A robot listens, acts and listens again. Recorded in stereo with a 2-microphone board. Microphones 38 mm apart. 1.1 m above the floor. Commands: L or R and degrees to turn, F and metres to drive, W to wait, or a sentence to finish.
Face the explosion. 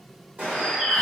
R40
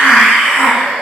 W
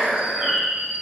I heard an explosion, but can't make it out now. It was about straight ahead or 100° right.